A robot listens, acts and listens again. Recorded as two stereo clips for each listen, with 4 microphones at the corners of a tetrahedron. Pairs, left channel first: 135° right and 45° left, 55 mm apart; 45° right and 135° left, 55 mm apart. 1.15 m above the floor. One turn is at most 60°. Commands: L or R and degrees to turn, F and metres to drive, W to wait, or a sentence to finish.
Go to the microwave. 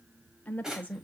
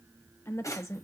W
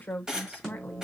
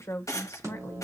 L60
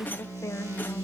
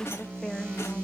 L60
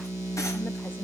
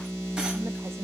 L10
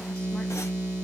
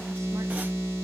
F1.0
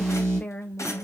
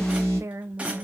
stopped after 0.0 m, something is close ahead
Something is in my way. I am facing the microwave but have not reached it.